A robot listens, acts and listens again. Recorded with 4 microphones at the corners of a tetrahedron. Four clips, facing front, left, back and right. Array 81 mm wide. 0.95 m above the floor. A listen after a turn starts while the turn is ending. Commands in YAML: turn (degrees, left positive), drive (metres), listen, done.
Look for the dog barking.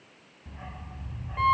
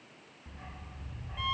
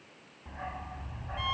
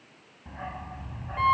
turn: -130
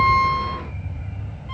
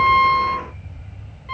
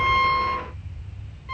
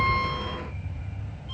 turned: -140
done: "Facing the dog barking."